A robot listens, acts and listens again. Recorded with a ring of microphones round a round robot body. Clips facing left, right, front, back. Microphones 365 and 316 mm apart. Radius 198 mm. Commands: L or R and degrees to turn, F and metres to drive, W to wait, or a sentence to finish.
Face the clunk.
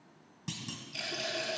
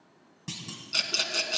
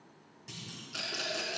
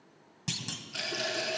L180
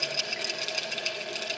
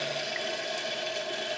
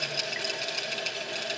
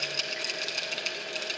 Facing where the clunk came from. I can't hear it now.